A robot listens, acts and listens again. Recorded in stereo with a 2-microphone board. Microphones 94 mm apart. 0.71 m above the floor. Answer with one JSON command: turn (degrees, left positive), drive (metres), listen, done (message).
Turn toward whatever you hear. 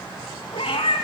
{"turn": 75}
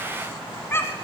{"turn": 25}
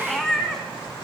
{"done": "Facing the cat meowing, 1 to 2 m away."}